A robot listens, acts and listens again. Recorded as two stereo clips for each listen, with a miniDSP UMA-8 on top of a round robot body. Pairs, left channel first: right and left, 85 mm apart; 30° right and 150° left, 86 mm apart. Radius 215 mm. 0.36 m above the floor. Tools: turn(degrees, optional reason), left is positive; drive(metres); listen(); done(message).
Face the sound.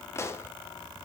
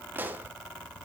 turn(degrees=-145, reason="The pop: 145° right.")
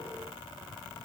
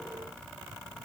done("Facing where the pop came from. I can't hear it now.")